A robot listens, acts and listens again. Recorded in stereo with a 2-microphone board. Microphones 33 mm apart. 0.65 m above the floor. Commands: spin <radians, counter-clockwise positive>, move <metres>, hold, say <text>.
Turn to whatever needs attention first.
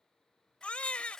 spin 0.79
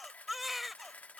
say Facing the baby crying.